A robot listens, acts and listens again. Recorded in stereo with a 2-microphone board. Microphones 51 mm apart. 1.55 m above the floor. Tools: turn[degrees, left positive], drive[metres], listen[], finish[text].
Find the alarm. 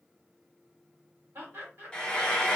Action: listen[]
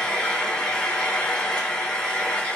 Action: listen[]
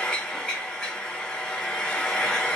Action: finish[I can't make out an alarm, only laughter and frying.]